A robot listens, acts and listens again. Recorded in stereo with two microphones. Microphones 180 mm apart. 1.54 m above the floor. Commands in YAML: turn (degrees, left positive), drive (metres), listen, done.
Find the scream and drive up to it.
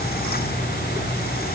listen: true
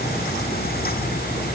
listen: true
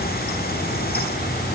done: "I can't make out a scream."